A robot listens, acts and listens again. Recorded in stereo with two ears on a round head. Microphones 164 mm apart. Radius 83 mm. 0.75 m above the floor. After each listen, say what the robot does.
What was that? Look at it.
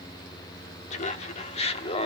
Turn 30° left.
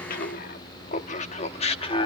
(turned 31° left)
Turn 30° left.
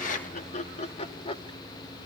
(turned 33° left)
Turn 30° left.
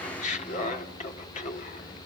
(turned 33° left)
Turn 40° left.
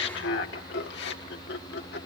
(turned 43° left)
Turn 115° left.
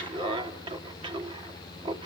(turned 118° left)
Turn 25° right.
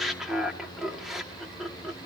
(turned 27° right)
Found it: laughter, straight ahead.